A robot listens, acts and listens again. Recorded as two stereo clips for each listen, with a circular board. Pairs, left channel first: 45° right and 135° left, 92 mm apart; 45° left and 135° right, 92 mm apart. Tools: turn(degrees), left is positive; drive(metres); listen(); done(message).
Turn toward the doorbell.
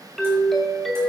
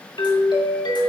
turn(degrees=45)
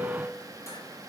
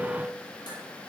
listen()
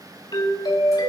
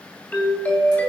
turn(degrees=-20)
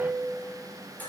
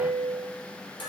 done("Facing the doorbell, 2 to 4 m away.")